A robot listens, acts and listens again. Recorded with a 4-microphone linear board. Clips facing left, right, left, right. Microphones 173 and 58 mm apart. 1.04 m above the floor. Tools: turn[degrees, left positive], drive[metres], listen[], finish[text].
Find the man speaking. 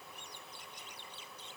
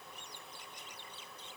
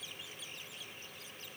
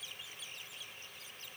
Action: listen[]
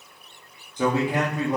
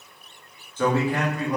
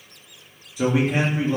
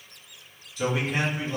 Thought: The man speaking: about 25° left or 155° left.
Action: turn[25]
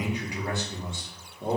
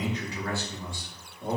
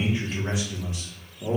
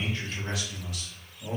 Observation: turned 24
Thought: The man speaking: about 30° left or 150° left.
Action: turn[30]
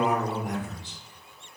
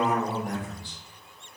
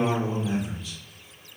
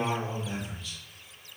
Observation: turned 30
Thought: The man speaking: about 20° left or 160° left.
Action: turn[20]
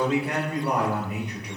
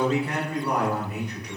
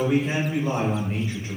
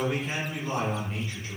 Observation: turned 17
Thought: The man speaking: about 20° left or 160° left.
Action: turn[20]
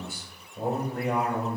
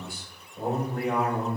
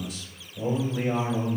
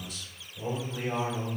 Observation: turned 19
Action: finish[Facing the man speaking.]